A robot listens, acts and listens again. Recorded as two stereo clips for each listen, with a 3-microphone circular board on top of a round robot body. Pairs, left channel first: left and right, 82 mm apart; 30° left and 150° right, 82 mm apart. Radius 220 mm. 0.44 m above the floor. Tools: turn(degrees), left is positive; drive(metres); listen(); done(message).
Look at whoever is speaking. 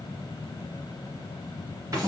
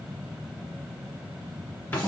listen()
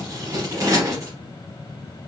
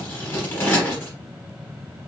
listen()
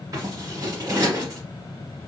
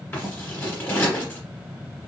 done("I can't make out anyone speaking to turn to.")